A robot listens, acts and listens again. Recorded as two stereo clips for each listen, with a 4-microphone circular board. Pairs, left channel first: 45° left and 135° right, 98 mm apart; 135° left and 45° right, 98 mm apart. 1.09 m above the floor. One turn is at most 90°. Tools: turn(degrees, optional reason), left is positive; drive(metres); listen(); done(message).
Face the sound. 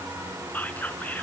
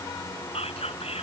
turn(degrees=90, reason="The whispering: 120° left.")
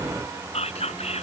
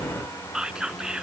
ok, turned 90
turn(degrees=40, reason="The whispering is now 40° left.")
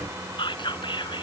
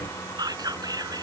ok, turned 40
done("Found it: whispering, straight ahead.")